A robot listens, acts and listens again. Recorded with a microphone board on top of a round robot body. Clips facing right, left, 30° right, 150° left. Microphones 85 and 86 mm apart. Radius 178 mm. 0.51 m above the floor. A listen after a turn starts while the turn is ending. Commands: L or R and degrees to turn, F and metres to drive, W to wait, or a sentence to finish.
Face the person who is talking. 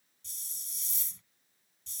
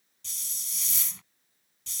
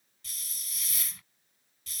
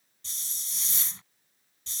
W
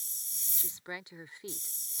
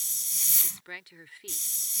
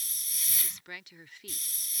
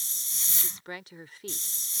R160
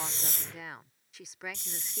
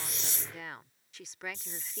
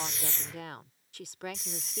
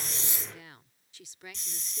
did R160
Found it: a woman speaking, straight ahead.